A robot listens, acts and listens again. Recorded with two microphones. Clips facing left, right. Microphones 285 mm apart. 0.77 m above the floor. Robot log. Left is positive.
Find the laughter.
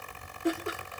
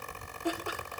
note: The laughter: about 25° left or 155° left.
cmd yaw +25
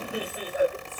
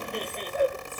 cmd yaw +30
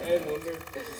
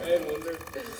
note: So it is at 10° right.
cmd yaw -10
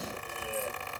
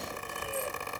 cmd idle
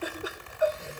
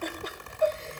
note: The laughter is now 10° left.
cmd yaw +10
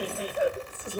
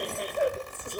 end: Found it: laughter, straight ahead, 2 to 4 m away.